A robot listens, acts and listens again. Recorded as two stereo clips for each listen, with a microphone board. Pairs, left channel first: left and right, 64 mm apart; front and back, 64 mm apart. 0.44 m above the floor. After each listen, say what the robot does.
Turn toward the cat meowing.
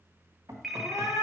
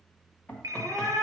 Turn 100° left.
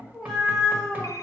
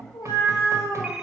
Found it: a cat meowing, straight ahead, 2 to 4 m away.